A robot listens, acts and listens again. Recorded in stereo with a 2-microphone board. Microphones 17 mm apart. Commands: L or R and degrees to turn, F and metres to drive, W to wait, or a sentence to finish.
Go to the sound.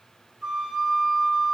R60
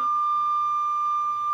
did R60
R60
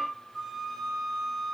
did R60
F1.0
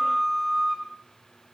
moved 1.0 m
F1.0
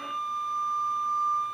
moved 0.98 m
F1.0
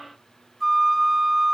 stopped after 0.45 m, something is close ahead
R10
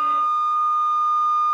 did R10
Arrived at the flute, straight ahead.